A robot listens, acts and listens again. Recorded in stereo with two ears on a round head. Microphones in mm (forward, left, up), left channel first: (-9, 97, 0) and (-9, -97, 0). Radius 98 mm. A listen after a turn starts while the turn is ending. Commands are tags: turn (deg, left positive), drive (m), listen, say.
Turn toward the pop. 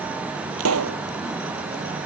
<turn deg="-75"/>
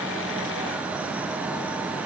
<listen/>
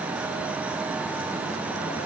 <say>I heard a pop, but can't make it out now. It was about straight ahead or 30° right.</say>